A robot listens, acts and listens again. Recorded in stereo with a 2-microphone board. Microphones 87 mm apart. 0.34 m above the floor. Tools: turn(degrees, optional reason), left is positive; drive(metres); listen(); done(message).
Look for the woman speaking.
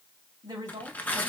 turn(degrees=-50, reason="The woman speaking: about 50° right or 130° right.")
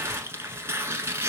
listen()
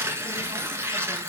listen()
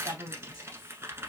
turn(degrees=-70, reason="So it is at 70° right.")
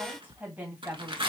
turn(degrees=-20, reason="The woman speaking is now 20° right.")
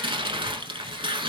listen()
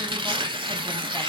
listen()
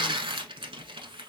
done("Facing where the woman speaking came from. I can't hear it now.")